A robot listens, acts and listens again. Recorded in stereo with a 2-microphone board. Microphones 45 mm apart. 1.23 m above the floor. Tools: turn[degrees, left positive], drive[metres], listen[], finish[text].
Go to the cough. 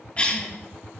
Thought: The cough: about 30° left or 150° left.
Action: turn[30]
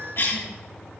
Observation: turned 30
Thought: So it is at 120° left.
Action: turn[120]
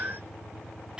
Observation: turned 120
Action: listen[]
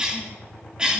Thought: The cough is now 20° right.
Action: turn[-20]
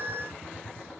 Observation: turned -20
Action: listen[]
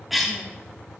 Action: drive[1.0]
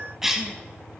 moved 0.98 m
Thought: The cough is now 10° right.
Action: turn[-10]
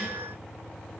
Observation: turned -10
Action: listen[]
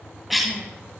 Action: drive[1.0]
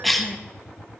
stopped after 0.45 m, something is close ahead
Action: finish[I am next to the cough.]